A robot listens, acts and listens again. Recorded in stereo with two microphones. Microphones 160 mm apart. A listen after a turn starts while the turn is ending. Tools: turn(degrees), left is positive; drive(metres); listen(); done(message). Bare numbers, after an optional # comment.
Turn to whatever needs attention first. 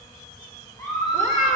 # The scream: about 20° left or 160° left.
turn(20)
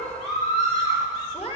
# So it is at 140° left.
turn(140)
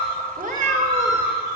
# The scream is now 15° right.
turn(-15)
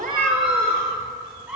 done("Facing the scream, 2 to 4 m away.")